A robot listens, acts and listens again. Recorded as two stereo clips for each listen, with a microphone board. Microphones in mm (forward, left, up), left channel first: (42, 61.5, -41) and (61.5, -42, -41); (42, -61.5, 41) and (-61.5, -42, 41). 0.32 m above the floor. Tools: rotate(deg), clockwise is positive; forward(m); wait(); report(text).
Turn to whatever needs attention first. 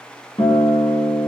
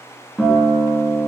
wait()
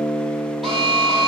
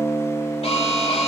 rotate(-15)
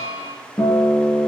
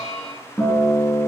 report("Facing the alarm, over 4 m away.")